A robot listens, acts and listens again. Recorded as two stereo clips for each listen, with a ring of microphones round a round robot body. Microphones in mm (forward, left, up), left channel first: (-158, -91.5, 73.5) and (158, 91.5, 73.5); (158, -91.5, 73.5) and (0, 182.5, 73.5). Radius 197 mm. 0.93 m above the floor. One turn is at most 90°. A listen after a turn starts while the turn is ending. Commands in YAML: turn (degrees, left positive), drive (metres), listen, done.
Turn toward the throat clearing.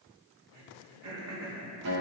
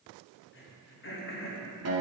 turn: -10
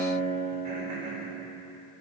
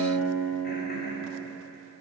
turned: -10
listen: true
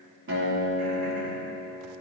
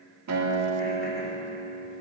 listen: true
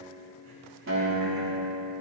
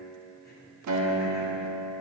done: "Facing where the throat clearing came from. I can't hear it now."